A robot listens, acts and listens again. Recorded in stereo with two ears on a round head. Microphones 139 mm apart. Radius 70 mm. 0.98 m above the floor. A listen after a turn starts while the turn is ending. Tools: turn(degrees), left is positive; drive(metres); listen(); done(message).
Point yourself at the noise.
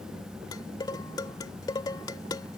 turn(degrees=25)
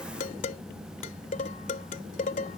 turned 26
turn(degrees=125)
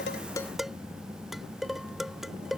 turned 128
done("Found it: dishes clattering, straight ahead.")